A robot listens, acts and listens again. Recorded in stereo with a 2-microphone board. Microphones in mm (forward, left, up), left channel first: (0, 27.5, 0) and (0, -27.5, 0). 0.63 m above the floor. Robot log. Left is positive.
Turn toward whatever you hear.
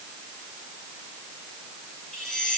cmd yaw +30
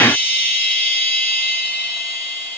note: So it is at 140° left.
cmd yaw +140
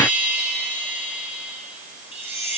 note: The chime is now 40° right.
cmd yaw -40
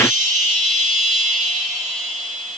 end: Found it: a chime, straight ahead, over 4 m away.